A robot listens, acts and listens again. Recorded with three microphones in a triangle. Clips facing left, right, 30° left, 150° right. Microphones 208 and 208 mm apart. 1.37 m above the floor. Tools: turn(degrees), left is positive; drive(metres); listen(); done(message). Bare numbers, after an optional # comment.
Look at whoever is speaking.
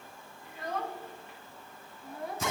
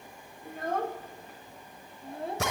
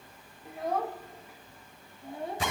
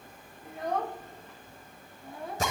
# The child speaking: 30° right.
turn(-30)
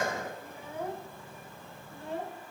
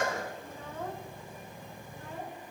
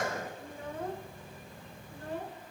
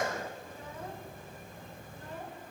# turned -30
# The child speaking is now 35° left.
turn(35)
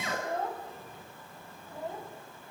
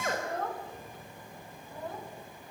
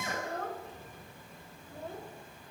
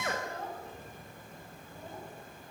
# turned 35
done("Facing the child speaking.")